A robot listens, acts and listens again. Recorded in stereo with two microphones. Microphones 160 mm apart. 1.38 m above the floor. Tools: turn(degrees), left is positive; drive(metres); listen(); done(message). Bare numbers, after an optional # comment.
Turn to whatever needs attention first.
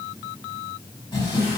listen()
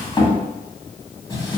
listen()
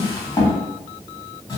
done("I can't make out anything urgent, only a drawer.")